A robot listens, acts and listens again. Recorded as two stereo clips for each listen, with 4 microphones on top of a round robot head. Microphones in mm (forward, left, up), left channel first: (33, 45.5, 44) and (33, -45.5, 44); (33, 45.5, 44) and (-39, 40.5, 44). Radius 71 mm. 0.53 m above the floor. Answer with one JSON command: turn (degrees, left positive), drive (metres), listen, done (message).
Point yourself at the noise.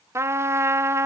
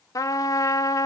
{"turn": -35}
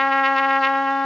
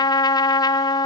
{"done": "Facing the trumpet."}